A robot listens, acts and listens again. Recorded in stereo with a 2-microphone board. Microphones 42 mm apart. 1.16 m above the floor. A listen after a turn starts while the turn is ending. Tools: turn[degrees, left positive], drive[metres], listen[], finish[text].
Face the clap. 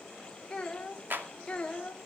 Thought: The clap: about 55° right or 125° right.
Action: turn[-55]
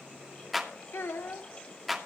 Action: finish[Found it: a clap, straight ahead.]